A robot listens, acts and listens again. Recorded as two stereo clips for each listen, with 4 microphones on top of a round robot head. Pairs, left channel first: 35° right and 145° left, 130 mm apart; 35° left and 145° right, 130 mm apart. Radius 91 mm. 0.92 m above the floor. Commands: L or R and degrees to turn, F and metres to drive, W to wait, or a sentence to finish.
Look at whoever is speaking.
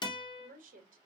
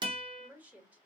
L135
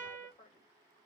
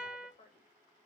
Facing the woman speaking, 1 to 2 m away.